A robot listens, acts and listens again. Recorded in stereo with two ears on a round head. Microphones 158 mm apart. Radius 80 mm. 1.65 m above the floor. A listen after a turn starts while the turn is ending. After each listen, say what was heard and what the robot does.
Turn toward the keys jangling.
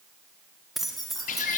Turn 30° left.
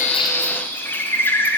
Keep listening.
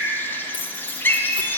So it is at 150° left. Turn 150° left.
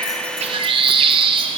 Keep listening.
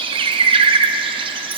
Keep listening.
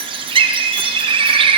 Facing where the keys jangling came from. I can't hear it now.